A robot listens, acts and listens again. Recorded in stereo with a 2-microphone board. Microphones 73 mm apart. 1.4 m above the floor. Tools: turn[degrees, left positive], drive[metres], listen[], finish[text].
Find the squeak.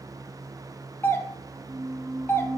Thought: The squeak: about 45° right or 135° right.
Action: turn[-45]
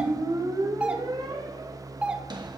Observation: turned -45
Thought: So it is at 80° right.
Action: turn[-80]
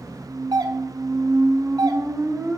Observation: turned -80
Thought: The squeak is now 30° right.
Action: turn[-30]
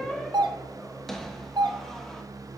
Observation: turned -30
Action: finish[Facing the squeak.]